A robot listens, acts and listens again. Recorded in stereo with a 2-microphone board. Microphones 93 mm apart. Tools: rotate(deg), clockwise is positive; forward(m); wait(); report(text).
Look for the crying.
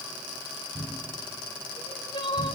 rotate(-60)
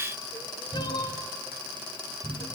rotate(-60)
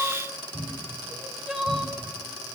report("Facing the crying, 2 to 4 m away.")